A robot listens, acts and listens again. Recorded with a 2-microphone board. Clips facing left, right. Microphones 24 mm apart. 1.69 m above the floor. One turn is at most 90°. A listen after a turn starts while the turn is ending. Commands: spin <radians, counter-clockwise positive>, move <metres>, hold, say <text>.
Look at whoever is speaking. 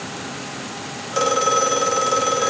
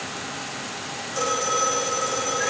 hold
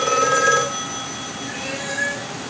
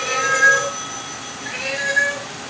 hold
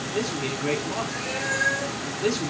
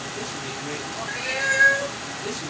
spin 0.96
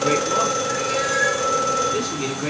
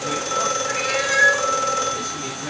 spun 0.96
hold
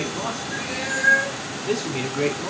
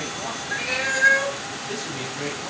spin 1.13
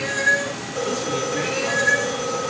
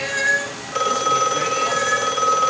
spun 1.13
hold
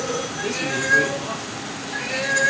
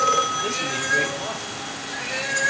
hold
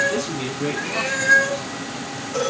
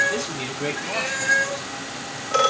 spin -0.17
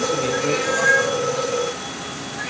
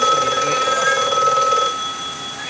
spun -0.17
hold
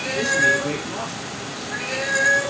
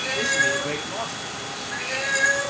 say Found it: a man speaking, straight ahead.